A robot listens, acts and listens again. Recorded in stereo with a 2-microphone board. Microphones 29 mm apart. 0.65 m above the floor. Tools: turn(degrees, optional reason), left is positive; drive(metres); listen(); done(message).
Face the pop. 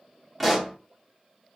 turn(degrees=30)
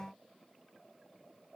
listen()
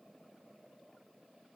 done("I heard a pop, but can't make it out now. It was about 30° right or 150° left.")